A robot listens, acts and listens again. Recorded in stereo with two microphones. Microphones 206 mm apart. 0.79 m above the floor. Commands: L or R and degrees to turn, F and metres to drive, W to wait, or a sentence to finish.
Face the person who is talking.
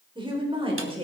R30
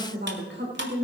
R115
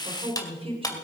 R30
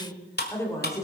L15
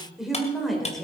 Found it: a woman speaking, straight ahead, 2 to 4 m away.